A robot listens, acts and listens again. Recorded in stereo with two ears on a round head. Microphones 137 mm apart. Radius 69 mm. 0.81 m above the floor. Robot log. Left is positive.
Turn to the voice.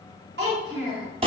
cmd yaw -90
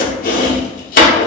cmd idle
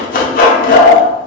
cmd idle
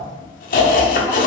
end: Facing where the child speaking came from. I can't hear it now.